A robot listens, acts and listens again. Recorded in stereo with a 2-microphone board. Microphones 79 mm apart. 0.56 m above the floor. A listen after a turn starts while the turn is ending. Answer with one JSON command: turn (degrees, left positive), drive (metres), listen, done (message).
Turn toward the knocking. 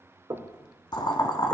{"turn": -65}
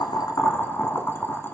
{"listen": true}
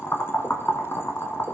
{"listen": true}
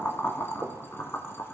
{"turn": -40}
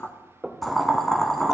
{"turn": -10}
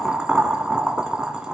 {"listen": true}
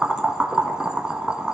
{"listen": true}
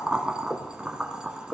{"done": "Facing the knocking."}